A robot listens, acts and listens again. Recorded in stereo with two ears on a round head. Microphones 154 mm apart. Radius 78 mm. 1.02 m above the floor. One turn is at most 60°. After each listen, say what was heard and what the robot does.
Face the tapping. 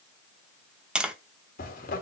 Turn 30° right.
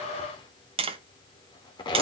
So it is at 145° right. Turn 60° right.
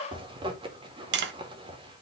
The tapping is now 80° right. Turn 60° right.
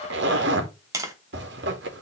The tapping is now 20° right. Turn 20° right.
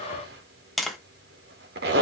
Found it: tapping, straight ahead, 1 to 2 m away.